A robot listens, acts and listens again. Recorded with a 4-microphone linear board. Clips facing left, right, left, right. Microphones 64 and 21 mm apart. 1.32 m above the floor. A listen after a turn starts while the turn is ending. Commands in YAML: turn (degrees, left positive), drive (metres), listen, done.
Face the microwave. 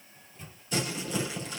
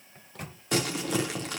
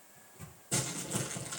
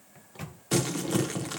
turn: -70
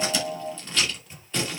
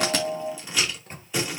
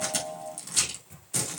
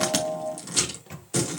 turn: -45
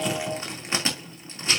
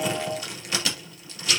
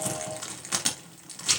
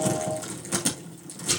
listen: true
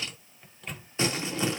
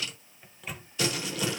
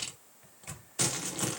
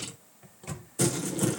done: "Facing the microwave."